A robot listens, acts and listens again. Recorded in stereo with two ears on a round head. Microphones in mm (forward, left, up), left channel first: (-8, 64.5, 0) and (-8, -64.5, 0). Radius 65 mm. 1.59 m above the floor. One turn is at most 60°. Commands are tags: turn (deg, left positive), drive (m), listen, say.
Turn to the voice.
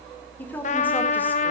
<turn deg="30"/>
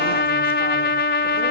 <listen/>
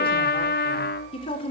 <turn deg="60"/>
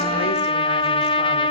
<turn deg="60"/>
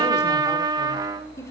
<turn deg="20"/>
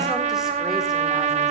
<listen/>
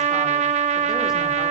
<listen/>
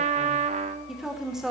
<say>Facing the woman speaking, over 4 m away.</say>